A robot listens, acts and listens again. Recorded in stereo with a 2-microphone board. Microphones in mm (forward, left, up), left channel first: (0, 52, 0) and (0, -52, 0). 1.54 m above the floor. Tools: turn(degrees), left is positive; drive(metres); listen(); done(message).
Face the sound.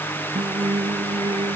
turn(degrees=-45)
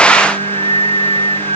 turn(degrees=-90)
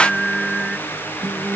done("Facing the singing.")